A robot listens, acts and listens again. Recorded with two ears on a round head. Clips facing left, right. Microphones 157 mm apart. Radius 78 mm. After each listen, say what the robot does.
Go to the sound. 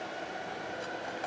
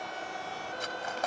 Turn 70° right.
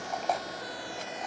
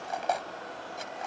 Drive 1.0 m forward.
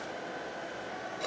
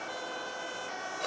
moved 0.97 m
Drive 1.0 m forward.
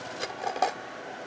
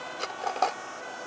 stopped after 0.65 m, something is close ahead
Turn 10° left.
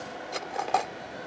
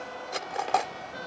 I am next to the cutlery clinking.